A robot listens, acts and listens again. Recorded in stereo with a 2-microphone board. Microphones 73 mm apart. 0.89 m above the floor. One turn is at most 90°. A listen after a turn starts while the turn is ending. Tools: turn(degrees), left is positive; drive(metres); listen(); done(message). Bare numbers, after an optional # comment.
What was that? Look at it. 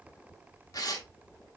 # The tearing paper: about 55° left or 125° left.
turn(55)
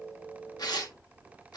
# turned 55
# So it is at 70° left.
turn(70)
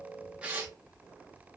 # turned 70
# The tearing paper is now 25° right.
turn(-25)
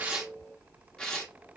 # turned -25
# The tearing paper is now 10° left.
turn(10)
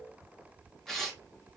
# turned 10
done("Found it: tearing paper, straight ahead, under 1 m away.")